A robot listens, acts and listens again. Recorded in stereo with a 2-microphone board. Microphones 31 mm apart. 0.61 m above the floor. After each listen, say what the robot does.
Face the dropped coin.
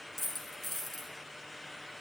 Turn 30° left.
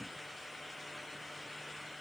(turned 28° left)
Keep listening.
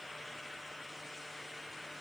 I heard a dropped coin, but can't make it out now. It was about 25° right or 150° left.